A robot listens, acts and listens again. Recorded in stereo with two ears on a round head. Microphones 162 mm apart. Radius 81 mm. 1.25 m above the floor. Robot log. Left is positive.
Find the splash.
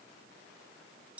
cmd idle
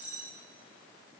cmd idle
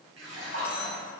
note: The splash: about 75° right or 105° right.
cmd yaw -75
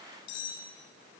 cmd idle
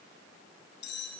end: I heard a splash, but can't make it out now. It was about straight ahead or 30° right.